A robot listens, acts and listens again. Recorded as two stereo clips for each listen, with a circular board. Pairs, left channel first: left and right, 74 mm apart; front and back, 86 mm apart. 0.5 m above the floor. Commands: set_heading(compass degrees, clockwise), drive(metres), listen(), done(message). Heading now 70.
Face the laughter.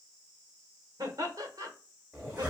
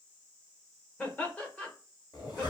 set_heading(140)
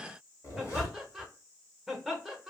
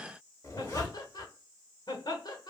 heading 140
done("Found it: laughter, straight ahead.")